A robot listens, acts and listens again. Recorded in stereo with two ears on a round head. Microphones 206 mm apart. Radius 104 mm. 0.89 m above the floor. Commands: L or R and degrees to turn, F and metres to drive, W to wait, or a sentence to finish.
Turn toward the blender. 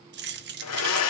L75
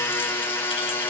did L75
L10
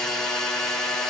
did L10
Facing the blender, 2 to 4 m away.